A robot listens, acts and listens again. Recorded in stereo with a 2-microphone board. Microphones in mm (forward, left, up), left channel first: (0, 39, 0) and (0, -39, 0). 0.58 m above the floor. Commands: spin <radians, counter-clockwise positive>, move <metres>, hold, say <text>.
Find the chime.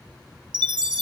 spin -1.57
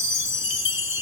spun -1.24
spin -0.52
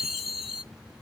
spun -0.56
say Found it: a chime, straight ahead.